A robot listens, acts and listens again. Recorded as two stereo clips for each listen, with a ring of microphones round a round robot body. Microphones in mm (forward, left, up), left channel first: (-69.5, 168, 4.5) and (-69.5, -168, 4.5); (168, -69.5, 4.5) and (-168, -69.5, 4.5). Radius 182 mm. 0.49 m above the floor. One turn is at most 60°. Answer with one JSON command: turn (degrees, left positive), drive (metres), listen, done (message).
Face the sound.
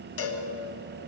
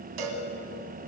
{"turn": 60}
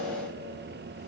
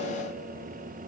{"turn": 60}
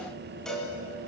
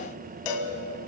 {"done": "Found it: a cowbell, straight ahead."}